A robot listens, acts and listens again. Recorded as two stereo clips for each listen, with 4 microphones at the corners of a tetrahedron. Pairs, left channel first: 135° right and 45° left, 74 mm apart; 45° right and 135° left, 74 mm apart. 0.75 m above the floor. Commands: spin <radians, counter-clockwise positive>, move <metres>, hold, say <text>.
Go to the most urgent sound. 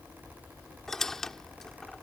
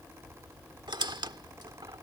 hold
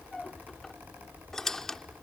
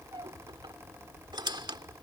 hold
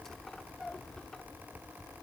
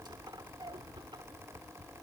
say I can't make out anything urgent to turn to.